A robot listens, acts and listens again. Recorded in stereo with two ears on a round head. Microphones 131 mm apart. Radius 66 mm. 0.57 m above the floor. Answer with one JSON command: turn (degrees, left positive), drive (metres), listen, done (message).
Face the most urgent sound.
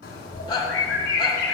{"turn": 30}
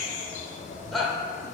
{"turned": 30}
{"done": "Facing the shout, 1 to 2 m away."}